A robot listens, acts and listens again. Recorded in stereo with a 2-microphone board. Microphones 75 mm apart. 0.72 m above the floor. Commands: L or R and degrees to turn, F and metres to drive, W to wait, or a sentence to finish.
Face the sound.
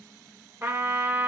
R35
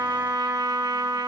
R110
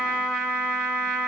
Found it: a trumpet, straight ahead, 1 to 2 m away.